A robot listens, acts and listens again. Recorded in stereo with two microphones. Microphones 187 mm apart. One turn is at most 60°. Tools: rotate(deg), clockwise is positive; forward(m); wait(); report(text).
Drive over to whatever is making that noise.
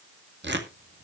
rotate(60)
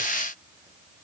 wait()
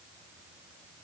wait()
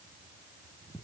report("I heard tearing paper, but can't make it out now. It was about 10° right or 50° right. I did not reach it.")